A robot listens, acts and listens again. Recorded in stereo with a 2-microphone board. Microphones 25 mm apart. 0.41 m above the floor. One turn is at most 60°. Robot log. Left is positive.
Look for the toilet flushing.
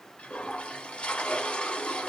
note: The toilet flushing: about 65° left or 115° left.
cmd yaw +60
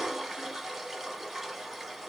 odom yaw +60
end: Found it: a toilet flushing, straight ahead, under 1 m away.